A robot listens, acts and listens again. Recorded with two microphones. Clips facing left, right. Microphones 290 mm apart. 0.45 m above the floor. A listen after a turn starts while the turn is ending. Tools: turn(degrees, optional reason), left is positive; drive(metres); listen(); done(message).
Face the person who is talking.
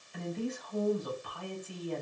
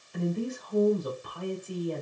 turn(degrees=-50, reason="The woman speaking: about 50° right or 130° right.")
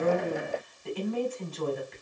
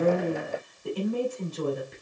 turn(degrees=-65, reason="So it is at 65° right.")
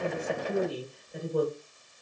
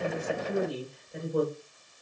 done("Found it: a woman speaking, straight ahead, 1 to 2 m away.")